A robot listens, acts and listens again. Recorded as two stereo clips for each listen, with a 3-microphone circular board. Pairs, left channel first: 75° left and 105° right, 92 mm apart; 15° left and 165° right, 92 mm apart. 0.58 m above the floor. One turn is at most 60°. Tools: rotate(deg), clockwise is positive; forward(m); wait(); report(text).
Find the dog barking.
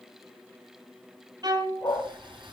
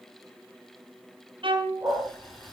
rotate(-60)
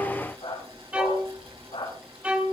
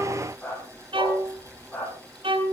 rotate(-60)
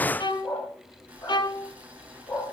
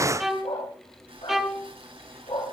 rotate(-25)
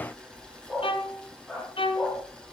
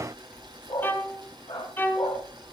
report("Found it: a dog barking, straight ahead.")